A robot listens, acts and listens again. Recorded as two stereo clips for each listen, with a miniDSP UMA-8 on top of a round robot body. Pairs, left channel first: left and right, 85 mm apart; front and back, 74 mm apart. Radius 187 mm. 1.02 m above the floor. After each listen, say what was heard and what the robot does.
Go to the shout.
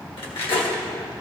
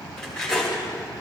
Keep listening.
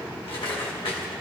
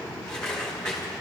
Keep listening.
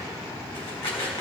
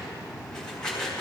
I can't make out a shout, only cutlery clinking.